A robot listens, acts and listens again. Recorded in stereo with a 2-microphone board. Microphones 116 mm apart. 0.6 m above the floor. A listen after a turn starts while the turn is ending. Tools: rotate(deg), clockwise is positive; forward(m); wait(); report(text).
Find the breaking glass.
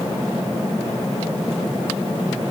wait()
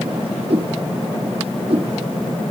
wait()
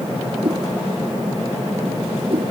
report("I can't make out breaking glass to turn to.")